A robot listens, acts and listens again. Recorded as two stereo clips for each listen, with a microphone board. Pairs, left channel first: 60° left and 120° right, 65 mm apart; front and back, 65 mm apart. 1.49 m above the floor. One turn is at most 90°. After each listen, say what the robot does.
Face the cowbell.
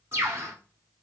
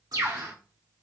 Keep listening.
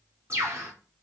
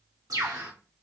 Keep listening.
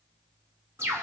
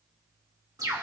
I can't make out a cowbell to turn to.